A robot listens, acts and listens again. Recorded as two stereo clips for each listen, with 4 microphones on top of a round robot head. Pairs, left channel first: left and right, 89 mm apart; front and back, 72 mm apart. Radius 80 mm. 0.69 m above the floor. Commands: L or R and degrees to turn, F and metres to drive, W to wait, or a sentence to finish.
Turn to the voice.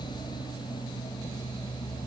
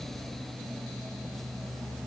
W
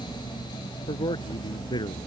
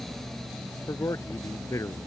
L50
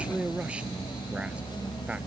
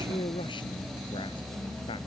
R15
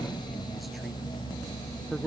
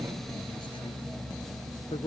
Facing the man speaking.